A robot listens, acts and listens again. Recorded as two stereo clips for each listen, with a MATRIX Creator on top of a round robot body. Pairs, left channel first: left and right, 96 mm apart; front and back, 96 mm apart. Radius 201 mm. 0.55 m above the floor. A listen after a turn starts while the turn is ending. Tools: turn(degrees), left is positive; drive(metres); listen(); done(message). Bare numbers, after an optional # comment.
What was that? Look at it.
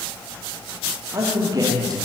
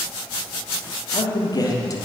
# The man speaking: 50° right.
turn(-50)
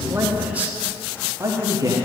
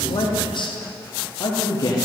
# The man speaking is now 45° right.
turn(-45)
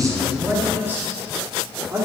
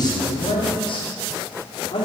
# The man speaking is now 30° right.
turn(-30)
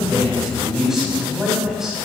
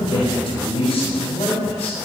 done("Found it: a man speaking, straight ahead, 2 to 4 m away.")